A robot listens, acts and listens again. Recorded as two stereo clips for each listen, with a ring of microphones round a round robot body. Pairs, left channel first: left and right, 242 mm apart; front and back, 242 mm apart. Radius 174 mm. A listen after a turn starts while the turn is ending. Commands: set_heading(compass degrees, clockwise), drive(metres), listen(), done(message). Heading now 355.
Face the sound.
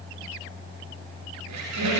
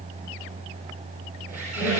set_heading(90)
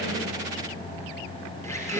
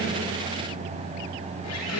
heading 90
set_heading(80)
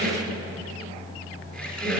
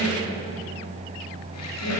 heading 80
done("Found it: a squeak, straight ahead, over 4 m away.")